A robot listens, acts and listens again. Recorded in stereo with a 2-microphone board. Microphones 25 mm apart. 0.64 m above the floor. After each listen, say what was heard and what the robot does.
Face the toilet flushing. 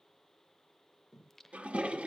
The toilet flushing: about 70° right or 110° right. Turn 70° right.
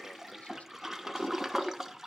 So it is at 15° right. Turn 15° right.
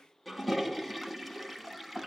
Found it: a toilet flushing, straight ahead.